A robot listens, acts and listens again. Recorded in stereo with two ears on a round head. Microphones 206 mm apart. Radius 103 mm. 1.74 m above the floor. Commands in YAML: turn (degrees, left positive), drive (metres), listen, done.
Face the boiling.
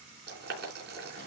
turn: -45
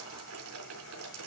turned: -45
turn: -85
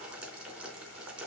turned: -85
done: "Found it: boiling, straight ahead."